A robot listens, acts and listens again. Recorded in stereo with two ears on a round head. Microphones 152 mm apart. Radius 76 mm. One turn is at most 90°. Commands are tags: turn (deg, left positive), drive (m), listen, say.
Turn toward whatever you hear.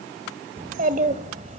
<turn deg="-40"/>
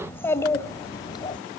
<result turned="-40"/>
<turn deg="25"/>
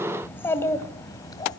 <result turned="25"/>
<turn deg="20"/>
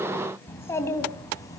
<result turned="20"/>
<turn deg="20"/>
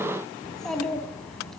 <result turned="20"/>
<say>Facing the child speaking.</say>